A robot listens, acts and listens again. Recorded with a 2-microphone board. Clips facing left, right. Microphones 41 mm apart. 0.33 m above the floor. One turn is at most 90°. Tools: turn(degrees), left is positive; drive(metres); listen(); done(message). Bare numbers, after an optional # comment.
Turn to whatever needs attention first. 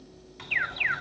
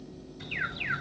# The alarm: about 45° left or 135° left.
turn(45)
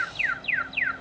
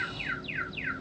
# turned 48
# So it is at 75° left.
turn(75)
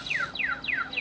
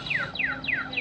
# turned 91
# The alarm is now 20° right.
turn(-20)
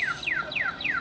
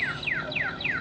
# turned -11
done("Found it: an alarm, straight ahead, 1 to 2 m away.")